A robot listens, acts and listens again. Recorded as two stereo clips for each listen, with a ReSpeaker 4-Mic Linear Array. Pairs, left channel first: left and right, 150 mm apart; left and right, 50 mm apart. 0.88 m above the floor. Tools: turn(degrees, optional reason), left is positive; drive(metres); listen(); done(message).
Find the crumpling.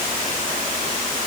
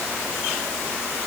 listen()
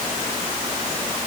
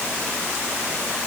listen()
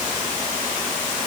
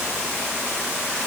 done("I can't make out crumpling to turn to.")